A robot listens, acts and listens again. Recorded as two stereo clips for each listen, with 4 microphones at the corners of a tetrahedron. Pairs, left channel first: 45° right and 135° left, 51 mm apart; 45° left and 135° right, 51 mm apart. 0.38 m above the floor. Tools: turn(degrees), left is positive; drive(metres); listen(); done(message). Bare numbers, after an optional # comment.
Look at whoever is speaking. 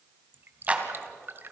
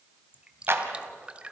listen()
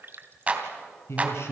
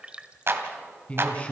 # The man speaking: 20° right.
turn(-20)
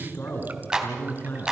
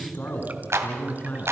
done("Facing the man speaking, over 4 m away.")